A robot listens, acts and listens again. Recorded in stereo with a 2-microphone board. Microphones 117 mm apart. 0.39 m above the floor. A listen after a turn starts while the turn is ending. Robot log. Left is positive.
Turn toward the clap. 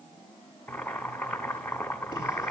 cmd idle
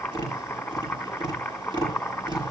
cmd idle
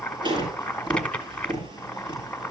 end: I can't make out a clap to turn to.